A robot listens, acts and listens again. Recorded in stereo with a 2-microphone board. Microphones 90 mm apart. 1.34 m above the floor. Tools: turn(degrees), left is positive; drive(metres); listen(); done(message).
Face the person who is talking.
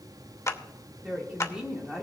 turn(degrees=-30)
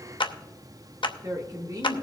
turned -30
turn(degrees=-140)
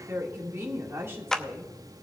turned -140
turn(degrees=-30)
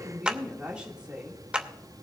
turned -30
turn(degrees=-10)
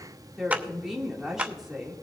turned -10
done("Found it: a woman speaking, straight ahead, 2 to 4 m away.")